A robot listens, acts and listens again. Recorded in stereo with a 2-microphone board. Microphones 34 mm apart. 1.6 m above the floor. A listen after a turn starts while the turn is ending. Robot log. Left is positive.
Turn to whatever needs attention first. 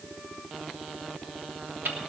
cmd idle
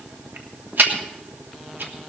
cmd idle
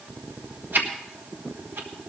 end: I can't make out anything urgent, only ticking.